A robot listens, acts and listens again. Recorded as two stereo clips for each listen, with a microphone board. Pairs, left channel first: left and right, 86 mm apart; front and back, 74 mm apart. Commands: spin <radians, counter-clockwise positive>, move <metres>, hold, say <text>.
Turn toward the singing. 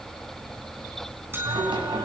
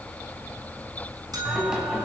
spin -1.75
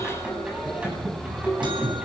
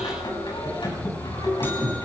spin -0.35
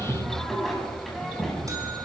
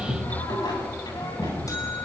say Facing the singing, over 4 m away.